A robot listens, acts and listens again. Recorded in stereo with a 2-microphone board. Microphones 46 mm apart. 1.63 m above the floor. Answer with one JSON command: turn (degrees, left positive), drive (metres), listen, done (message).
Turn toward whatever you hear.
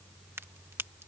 {"turn": -65}
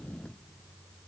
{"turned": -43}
{"listen": true}
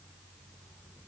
{"done": "I heard a crack, but can't make it out now. It was about 20° right or 75° right."}